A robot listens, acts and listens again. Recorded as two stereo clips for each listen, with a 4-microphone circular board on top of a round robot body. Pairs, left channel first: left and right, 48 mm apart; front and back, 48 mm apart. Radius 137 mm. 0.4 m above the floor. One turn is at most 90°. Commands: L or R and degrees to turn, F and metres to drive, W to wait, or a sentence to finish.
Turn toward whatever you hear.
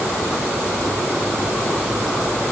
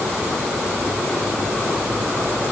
W
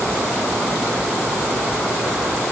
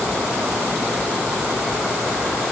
W
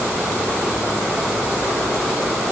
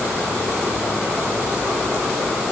I can't make out anything to turn to.